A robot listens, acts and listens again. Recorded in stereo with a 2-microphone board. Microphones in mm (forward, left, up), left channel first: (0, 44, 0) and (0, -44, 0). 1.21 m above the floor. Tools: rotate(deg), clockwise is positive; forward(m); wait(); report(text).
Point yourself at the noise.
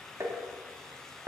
rotate(35)
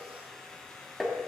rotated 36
report("Facing the tapping.")